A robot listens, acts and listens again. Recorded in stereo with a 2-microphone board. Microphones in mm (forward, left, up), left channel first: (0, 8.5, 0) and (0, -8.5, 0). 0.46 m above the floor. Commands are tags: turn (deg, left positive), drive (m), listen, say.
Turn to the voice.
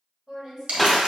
<turn deg="-30"/>
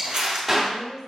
<say>Facing the woman speaking, 1 to 2 m away.</say>